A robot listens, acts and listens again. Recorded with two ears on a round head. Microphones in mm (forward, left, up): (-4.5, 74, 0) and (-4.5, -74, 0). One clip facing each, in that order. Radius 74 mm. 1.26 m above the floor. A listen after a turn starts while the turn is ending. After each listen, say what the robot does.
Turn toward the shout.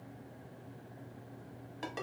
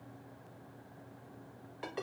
Keep listening.
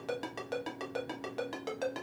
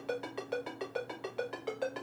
Keep listening.
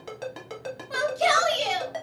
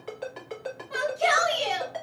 Turn 45° left.
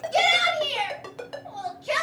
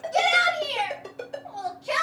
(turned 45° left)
Turn 10° left.
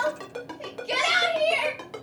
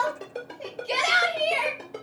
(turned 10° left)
Found it: a shout, straight ahead, 1 to 2 m away.